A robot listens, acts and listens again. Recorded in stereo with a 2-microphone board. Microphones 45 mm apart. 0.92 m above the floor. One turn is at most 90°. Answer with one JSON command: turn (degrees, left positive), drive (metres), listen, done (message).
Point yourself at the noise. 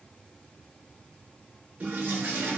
{"turn": -40}
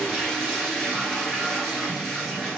{"done": "Facing the toilet flushing."}